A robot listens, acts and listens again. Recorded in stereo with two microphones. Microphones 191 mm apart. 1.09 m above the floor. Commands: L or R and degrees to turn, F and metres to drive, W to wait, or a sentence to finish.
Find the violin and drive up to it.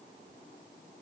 W
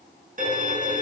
R45
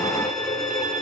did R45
F1.0
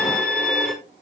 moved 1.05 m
F1.0
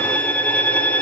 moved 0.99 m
L10
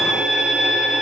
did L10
F1.0
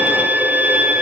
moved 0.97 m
R10
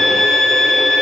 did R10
F1.0
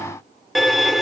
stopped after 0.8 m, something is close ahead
I am next to the violin.